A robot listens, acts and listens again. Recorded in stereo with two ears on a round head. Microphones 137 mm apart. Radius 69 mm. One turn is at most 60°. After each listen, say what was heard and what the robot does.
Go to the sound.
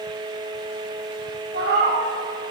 The cat meowing: about 70° right or 110° right. Turn 60° right.
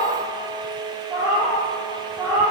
So it is at 10° right. Turn 10° right.
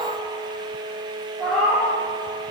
Drive 1.0 m forward.
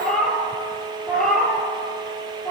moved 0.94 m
Drive 1.0 m forward.
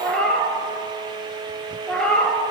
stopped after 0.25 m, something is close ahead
I am next to the cat meowing.